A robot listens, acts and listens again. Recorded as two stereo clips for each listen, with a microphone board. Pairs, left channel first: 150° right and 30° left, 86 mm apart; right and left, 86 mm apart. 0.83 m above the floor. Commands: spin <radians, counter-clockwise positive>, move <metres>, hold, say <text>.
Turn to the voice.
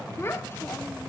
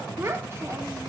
spin 2.62
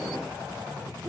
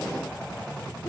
hold
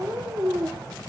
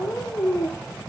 spin -0.52
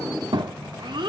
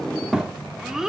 say Facing the child speaking.